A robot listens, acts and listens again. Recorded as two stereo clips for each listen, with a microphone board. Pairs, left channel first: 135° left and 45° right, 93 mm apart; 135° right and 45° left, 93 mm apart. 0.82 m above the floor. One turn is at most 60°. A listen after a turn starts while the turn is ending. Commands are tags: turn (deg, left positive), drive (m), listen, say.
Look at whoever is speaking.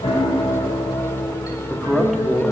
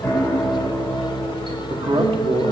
<turn deg="45"/>
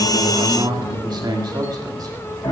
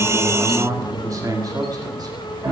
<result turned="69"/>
<say>Found it: a man speaking, straight ahead.</say>